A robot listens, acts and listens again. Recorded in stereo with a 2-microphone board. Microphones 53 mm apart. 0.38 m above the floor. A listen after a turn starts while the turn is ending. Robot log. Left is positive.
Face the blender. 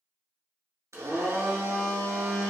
note: The blender: about 70° right or 110° right.
cmd yaw -70
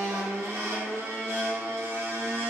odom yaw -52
note: So it is at 60° right.
cmd yaw -60
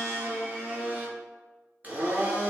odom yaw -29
note: The blender is now 30° right.
cmd yaw -30
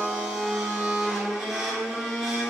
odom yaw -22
end: Facing the blender, 1 to 2 m away.